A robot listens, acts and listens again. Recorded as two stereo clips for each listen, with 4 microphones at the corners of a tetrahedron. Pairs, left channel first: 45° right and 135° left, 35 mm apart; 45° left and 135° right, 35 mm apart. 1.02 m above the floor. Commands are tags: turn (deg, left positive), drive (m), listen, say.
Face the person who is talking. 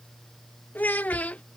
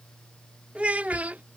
<turn deg="-90"/>
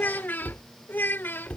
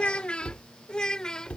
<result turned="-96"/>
<turn deg="-25"/>
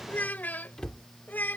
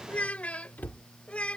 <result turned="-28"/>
<turn deg="-10"/>
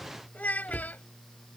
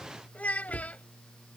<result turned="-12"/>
<say>Found it: a child speaking, straight ahead.</say>